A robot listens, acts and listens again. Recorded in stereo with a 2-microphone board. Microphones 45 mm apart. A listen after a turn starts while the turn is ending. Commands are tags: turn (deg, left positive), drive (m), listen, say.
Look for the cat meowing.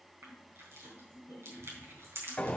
<listen/>
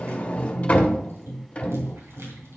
<listen/>
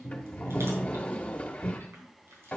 <say>I can't make out a cat meowing to turn to.</say>